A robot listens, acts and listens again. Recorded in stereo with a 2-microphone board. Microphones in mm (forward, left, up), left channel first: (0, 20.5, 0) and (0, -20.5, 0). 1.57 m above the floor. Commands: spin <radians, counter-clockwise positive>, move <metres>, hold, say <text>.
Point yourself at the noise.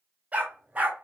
spin -0.61
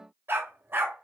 spin -2.09
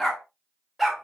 say Facing the dog barking.